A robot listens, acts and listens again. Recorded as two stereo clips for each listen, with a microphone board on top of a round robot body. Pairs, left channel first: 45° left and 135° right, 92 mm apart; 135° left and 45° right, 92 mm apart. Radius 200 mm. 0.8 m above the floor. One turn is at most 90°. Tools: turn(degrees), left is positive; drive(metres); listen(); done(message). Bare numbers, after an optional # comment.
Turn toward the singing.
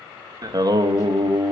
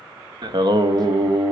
# The singing: 85° right.
turn(-85)
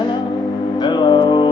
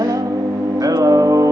# The singing is now 10° left.
turn(10)
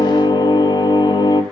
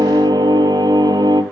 done("Found it: singing, straight ahead.")